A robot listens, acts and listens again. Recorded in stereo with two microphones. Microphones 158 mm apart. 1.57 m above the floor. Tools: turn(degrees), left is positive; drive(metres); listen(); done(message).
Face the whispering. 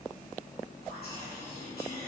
turn(degrees=90)
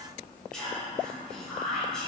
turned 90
done("Facing the whispering, 1 to 2 m away.")